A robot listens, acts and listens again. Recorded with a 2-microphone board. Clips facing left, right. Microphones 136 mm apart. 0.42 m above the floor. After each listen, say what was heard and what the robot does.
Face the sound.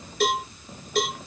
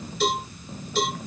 The cowbell: about 60° left or 120° left. Turn 60° left.
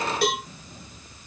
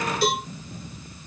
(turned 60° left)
So it is at 60° left. Turn 60° left.
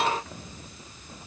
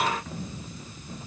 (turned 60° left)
Keep listening.
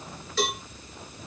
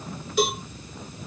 The cowbell is now 15° right. Turn 15° right.
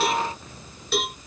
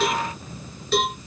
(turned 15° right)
Found it: a cowbell, straight ahead, 2 to 4 m away.